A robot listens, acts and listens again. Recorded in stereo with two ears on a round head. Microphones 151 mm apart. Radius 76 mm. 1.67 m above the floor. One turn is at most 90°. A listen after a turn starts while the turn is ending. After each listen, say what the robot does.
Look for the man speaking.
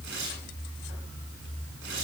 Keep listening.
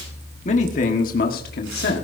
Turn 65° left.
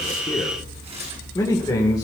Turn 25° left.
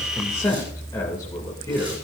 Turn 20° left.
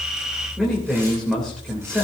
Found it: a man speaking, straight ahead, 2 to 4 m away.